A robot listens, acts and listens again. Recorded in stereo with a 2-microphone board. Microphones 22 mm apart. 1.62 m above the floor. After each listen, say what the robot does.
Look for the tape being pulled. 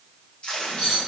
Turn 55° left.
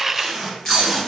Turn 10° left.
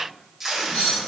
Facing the tape being pulled, 1 to 2 m away.